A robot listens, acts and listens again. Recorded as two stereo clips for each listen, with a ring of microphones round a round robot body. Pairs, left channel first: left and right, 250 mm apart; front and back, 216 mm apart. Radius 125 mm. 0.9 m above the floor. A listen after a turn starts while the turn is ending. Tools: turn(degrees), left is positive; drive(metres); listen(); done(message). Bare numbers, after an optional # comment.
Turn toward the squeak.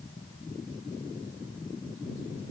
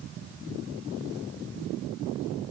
listen()
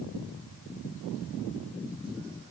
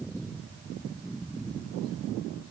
listen()
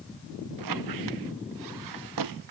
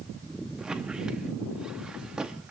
# The squeak: 95° right.
turn(-95)
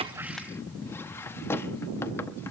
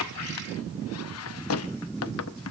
# The squeak is now 10° left.
turn(10)
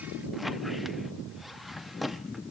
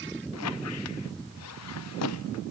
done("Found it: a squeak, straight ahead, under 1 m away.")